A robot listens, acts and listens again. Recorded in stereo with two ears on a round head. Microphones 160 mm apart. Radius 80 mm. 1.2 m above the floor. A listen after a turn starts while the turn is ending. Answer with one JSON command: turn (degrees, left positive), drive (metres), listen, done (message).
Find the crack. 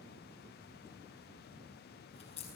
{"turn": 35}
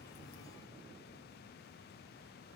{"listen": true}
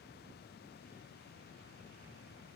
{"done": "I heard a crack, but can't make it out now. It was about straight ahead or 110° left."}